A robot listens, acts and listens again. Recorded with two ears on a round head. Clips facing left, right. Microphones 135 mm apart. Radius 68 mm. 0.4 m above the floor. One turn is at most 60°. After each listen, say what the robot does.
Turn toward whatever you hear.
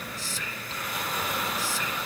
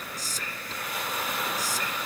Turn 40° right.
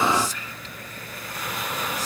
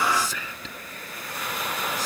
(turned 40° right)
Turn 60° right.
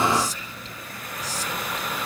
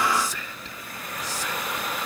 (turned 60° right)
Turn 50° right.
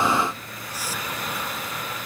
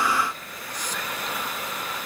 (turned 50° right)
Keep listening.
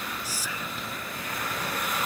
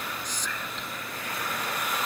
Turn 10° left.
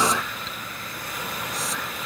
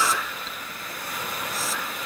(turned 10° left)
Keep listening.
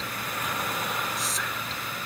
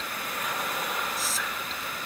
Found it: whispering, straight ahead.